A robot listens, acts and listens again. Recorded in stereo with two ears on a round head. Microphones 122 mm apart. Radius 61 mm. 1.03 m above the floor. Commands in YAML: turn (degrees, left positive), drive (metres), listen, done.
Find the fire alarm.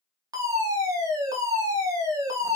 turn: -25
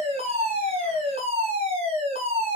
turn: -125
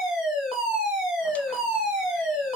done: "Found it: a fire alarm, straight ahead."